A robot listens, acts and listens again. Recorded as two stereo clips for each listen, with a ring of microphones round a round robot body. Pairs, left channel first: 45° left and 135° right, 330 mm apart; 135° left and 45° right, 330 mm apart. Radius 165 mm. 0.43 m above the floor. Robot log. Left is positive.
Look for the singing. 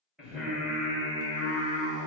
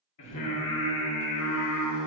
note: The singing: 165° left.
cmd yaw +165
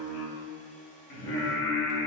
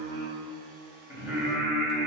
note: The singing is now 45° left.
cmd yaw +45
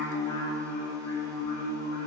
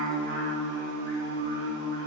note: The singing is now 10° left.
cmd yaw +10
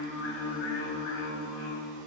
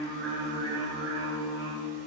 end: Facing the singing, 2 to 4 m away.